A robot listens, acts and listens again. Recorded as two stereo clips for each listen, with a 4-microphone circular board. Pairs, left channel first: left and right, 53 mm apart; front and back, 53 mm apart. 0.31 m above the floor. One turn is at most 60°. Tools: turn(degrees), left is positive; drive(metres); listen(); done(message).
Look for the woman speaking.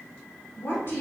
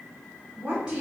turn(degrees=60)
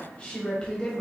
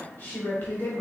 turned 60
turn(degrees=20)
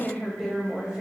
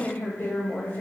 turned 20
turn(degrees=-25)
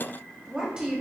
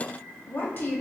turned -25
turn(degrees=-30)
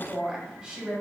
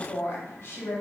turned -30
turn(degrees=-20)
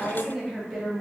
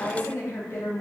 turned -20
done("Found it: a woman speaking, straight ahead.")